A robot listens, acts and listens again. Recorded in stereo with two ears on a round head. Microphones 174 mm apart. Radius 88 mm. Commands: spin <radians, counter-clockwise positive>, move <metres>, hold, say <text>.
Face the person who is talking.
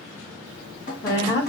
spin 0.35
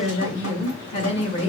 spin 2.44
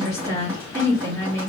spin 0.35
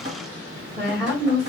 say Facing the woman speaking, 1 to 2 m away.